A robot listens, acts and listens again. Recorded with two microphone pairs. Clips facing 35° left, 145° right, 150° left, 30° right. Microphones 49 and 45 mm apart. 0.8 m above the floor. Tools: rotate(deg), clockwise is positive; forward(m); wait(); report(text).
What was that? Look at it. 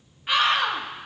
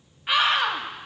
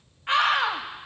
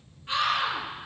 rotate(-130)
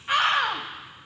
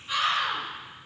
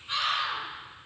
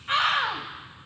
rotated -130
rotate(-10)
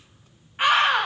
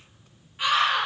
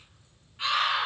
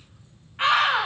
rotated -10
report("Facing the scream.")